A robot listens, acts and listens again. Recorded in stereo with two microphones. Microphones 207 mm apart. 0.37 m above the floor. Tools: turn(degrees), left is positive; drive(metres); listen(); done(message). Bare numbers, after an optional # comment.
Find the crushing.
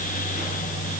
listen()
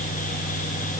listen()
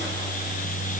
done("I can't make out crushing.")